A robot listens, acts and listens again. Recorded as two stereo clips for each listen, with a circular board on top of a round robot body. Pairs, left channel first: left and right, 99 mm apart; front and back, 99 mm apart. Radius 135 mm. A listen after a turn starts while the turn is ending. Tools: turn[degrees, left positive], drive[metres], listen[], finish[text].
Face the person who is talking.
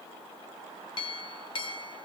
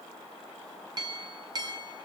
Action: listen[]
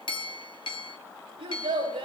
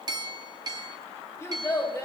Thought: The child speaking: 60° right.
Action: turn[-60]
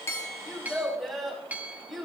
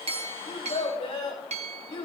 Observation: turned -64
Action: finish[Facing the child speaking, over 4 m away.]